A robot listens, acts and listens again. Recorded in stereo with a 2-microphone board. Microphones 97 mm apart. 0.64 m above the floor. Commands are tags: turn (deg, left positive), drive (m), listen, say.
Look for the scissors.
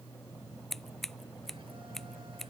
<turn deg="30"/>
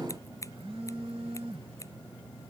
<listen/>
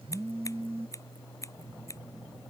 <turn deg="150"/>
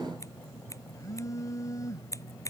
<turn deg="30"/>
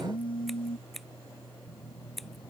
<say>Facing the scissors.</say>